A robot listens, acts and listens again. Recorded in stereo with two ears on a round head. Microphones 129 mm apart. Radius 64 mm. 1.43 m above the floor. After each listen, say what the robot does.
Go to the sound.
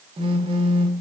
Turn 40° right.
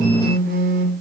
Turn 100° right.
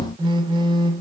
Turn 35° right.
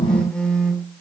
Drive 1.0 m forward.
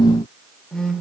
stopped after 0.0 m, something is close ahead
Blocked. The phone buzzing is further on, straight ahead.